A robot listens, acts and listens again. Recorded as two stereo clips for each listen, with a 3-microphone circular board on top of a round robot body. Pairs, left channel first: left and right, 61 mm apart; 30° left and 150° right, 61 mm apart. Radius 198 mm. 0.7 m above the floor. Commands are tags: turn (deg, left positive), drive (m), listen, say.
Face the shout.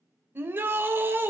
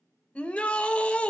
<turn deg="-40"/>
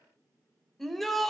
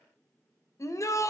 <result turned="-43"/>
<say>Facing the shout.</say>